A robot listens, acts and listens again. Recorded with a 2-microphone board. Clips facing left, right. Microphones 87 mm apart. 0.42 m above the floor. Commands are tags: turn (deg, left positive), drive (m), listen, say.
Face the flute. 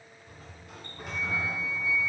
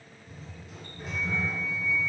<turn deg="30"/>
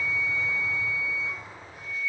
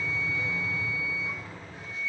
<turn deg="-20"/>
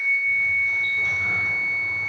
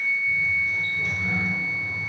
<say>Found it: a flute, straight ahead, 1 to 2 m away.</say>